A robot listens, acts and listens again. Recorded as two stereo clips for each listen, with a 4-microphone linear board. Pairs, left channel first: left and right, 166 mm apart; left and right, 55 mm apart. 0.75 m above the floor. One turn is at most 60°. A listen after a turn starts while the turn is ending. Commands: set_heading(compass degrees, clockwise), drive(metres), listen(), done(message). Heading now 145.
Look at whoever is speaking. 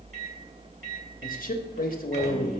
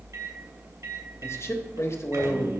set_heading(85)
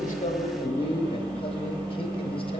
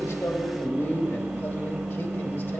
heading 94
set_heading(54)
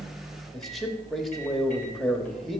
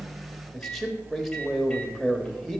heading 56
done("Facing the man speaking, 1 to 2 m away.")